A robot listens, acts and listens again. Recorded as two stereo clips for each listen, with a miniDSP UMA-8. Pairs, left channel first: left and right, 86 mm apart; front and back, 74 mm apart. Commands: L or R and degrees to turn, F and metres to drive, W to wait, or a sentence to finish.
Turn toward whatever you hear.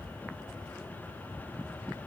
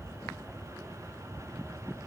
W
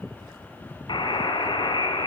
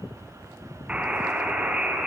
L105
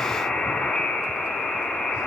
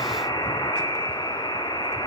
L10
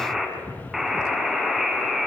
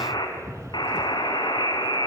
Found it: a buzzer, straight ahead.